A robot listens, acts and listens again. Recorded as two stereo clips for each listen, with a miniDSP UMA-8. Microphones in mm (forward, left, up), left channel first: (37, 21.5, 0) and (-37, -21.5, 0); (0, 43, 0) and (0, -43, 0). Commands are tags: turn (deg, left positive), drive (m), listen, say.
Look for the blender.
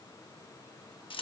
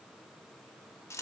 <listen/>
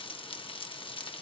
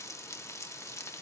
<listen/>
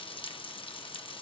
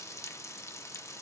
<say>I can't make out a blender to turn to.</say>